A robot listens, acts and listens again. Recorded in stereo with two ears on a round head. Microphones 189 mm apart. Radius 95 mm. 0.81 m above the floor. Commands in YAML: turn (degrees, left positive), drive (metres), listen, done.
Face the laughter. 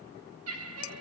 turn: -90
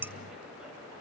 listen: true
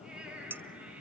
listen: true
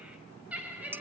turn: -10
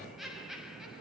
done: "Facing the laughter, over 4 m away."